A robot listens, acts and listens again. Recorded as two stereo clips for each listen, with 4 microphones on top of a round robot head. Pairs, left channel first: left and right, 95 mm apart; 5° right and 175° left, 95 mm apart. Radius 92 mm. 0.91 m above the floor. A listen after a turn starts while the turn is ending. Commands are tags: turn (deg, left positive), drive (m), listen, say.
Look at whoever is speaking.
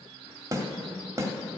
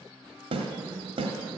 <listen/>
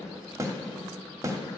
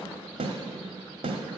<listen/>
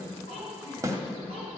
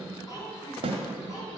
<turn deg="50"/>
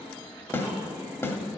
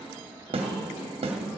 <listen/>
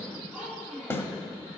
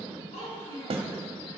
<say>Facing the child speaking.</say>